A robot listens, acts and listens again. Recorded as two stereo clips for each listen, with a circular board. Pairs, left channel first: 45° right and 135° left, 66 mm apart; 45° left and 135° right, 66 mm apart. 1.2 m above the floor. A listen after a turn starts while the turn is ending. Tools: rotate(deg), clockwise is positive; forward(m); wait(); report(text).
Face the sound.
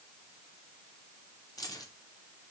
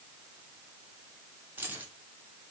rotate(70)
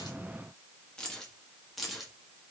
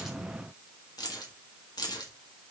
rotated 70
rotate(-45)
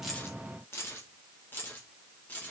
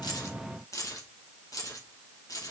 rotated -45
rotate(-20)
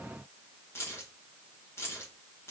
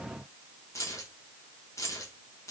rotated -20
report("Found it: keys jangling, straight ahead, 2 to 4 m away.")